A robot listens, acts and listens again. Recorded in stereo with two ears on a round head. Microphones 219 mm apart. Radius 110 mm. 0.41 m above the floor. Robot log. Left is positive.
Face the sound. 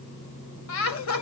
note: The laughter: about 60° left or 120° left.
cmd yaw +60
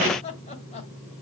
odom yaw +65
note: So it is at 30° left.
cmd yaw +30
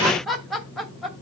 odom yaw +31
end: Facing the laughter.